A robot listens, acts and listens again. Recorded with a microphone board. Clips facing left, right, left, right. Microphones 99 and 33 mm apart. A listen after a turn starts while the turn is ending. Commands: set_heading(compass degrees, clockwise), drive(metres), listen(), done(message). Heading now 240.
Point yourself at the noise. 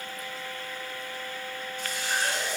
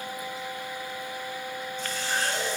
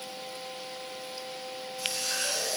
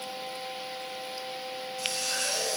set_heading(210)
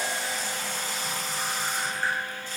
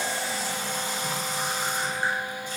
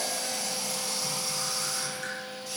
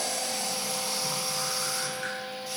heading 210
set_heading(225)
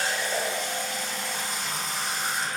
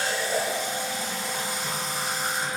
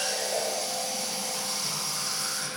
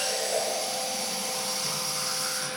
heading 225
done("Facing the running tap, 2 to 4 m away.")